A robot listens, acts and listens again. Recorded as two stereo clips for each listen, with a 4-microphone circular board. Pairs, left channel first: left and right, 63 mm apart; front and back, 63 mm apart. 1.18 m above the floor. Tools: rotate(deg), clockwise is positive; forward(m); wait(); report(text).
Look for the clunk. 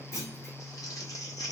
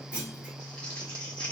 rotate(-110)
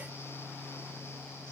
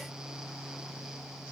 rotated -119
rotate(10)
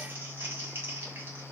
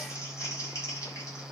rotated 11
report("I heard a clunk from this way, but can't make it out now.")